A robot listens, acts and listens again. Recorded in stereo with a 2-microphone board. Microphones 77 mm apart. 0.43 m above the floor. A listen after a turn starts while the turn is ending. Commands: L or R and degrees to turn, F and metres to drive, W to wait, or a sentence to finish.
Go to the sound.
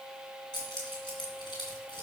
L90
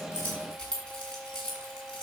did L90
L15
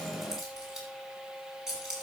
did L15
F1.0
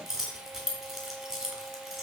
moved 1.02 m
F1.0
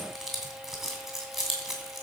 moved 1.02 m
F1.0
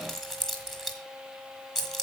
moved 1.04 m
F1.0
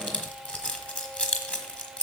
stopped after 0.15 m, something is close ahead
L15
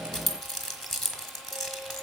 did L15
Arrived at the keys jangling, straight ahead.